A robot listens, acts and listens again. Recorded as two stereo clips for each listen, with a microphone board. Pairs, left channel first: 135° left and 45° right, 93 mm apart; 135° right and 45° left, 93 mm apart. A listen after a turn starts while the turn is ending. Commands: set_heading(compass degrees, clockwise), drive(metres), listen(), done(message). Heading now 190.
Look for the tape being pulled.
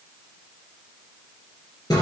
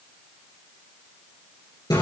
listen()
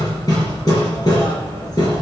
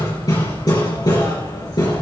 listen()
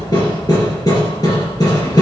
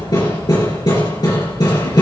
done("I can't make out tape being pulled, only hammering.")